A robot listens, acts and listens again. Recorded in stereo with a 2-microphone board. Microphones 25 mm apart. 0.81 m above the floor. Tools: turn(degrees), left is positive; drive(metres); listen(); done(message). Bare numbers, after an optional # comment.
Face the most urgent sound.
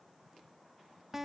listen()
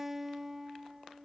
listen()
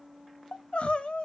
# The crying: about 50° left or 130° left.
turn(50)
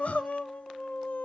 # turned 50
# So it is at 80° left.
turn(80)
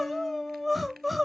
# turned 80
done("Found it: crying, straight ahead.")